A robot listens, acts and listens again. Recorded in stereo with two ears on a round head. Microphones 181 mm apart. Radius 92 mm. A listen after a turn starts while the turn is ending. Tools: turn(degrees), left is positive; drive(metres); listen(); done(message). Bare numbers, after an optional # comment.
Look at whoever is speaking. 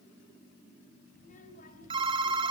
# The child speaking: about 40° left or 140° left.
turn(40)
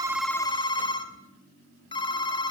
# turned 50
listen()
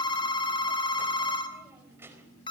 # So it is at 10° right.
turn(-10)
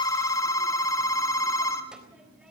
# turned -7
done("Found it: a child speaking, straight ahead, over 4 m away.")